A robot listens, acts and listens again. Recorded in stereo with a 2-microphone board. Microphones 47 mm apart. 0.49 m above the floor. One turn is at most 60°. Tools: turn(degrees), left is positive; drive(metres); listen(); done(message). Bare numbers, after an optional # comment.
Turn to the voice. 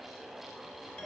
listen()
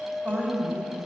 # The woman speaking: about 25° right or 155° right.
turn(-25)
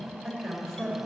done("Facing the woman speaking.")